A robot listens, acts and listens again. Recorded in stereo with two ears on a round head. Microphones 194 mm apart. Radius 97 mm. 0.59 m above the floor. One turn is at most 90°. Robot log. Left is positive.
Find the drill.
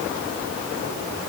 cmd idle
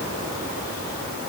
cmd idle
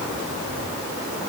end: I can't make out a drill.